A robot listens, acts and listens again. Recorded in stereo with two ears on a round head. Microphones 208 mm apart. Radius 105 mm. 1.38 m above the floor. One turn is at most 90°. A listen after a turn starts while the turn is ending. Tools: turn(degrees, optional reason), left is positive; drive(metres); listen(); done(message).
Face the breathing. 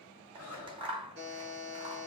turn(degrees=70, reason="The breathing: about 70° left or 110° left.")
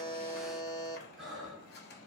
done("Facing the breathing.")